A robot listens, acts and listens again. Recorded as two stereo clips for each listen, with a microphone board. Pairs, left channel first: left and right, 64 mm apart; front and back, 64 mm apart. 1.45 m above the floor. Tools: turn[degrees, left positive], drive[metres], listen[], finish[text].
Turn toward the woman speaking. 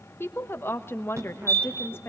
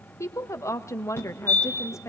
Thought: The woman speaking: 40° left.
Action: turn[40]
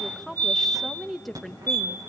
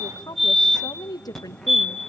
Action: finish[Facing the woman speaking, 1 to 2 m away.]